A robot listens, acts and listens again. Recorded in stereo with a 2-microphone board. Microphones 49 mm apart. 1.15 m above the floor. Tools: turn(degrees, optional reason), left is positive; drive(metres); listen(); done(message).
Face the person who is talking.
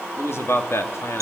turn(degrees=65, reason="The man speaking: about 65° left or 115° left.")
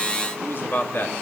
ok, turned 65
turn(degrees=50, reason="So it is at 50° left.")
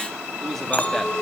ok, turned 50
done("Found it: a man speaking, straight ahead.")